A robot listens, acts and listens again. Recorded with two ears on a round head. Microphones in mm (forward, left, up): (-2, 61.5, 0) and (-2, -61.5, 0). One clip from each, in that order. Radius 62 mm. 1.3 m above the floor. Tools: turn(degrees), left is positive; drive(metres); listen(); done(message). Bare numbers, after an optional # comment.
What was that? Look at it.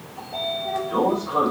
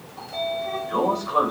# The sliding door: about 40° right or 140° right.
turn(-40)
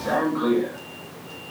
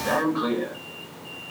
# So it is at 100° right.
turn(-100)
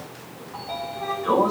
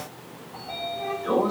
# The sliding door is now 20° left.
turn(20)
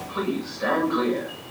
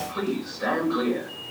done("Facing the sliding door, over 4 m away.")